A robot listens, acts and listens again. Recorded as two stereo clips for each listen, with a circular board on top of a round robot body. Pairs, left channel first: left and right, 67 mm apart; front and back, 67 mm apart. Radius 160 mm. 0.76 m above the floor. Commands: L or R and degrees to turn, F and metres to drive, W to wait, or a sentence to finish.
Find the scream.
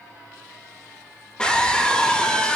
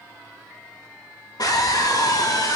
L15
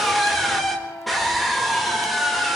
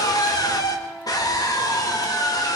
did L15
Facing the scream.